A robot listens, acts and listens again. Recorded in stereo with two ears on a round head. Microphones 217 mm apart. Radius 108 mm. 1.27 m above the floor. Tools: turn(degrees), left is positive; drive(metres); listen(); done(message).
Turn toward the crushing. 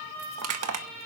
turn(degrees=-70)
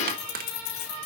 turn(degrees=-40)
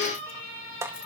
turn(degrees=-10)
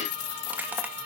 listen()
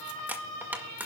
turn(degrees=-10)
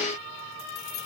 listen()
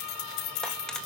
listen()
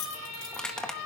done("Facing the crushing.")